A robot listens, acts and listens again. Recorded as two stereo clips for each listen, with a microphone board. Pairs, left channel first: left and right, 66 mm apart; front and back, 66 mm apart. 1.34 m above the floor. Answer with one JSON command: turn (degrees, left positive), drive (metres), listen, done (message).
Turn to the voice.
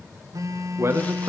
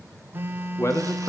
{"turn": -40}
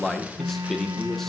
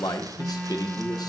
{"done": "Facing the man speaking."}